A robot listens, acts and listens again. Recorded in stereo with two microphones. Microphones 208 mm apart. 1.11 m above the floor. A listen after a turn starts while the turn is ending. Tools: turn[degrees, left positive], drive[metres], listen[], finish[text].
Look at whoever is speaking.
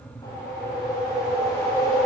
Action: listen[]
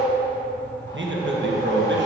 Thought: The man speaking: about 70° right or 110° right.
Action: turn[-70]
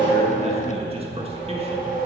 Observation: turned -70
Thought: So it is at 30° right.
Action: turn[-30]
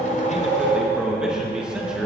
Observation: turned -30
Action: finish[Facing the man speaking, 1 to 2 m away.]